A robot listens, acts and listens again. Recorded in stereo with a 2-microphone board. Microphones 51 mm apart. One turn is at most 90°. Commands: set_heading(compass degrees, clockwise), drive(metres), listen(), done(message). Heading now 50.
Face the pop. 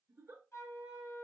listen()
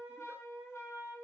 listen()
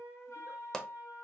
set_heading(20)
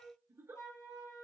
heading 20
listen()
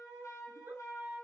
done("I heard a pop, but can't make it out now. It was about 15° right or 135° left.")